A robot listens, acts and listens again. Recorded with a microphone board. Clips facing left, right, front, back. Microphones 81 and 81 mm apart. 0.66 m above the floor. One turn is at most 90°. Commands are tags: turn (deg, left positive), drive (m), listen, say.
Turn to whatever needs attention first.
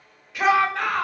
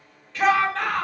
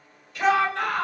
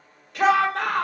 <turn deg="90"/>
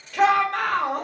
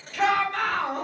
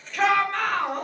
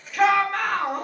<turn deg="90"/>
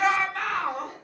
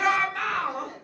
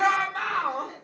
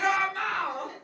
<say>Found it: a shout, straight ahead.</say>